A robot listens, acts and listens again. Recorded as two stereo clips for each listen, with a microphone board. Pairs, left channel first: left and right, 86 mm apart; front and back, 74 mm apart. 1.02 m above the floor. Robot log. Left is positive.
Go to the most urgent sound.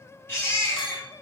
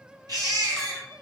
note: The baby crying: 155° left.
cmd yaw +155
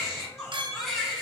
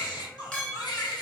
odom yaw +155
cmd fwd 1.0
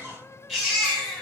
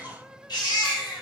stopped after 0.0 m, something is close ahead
end: Blocked. The baby crying is further on, straight ahead.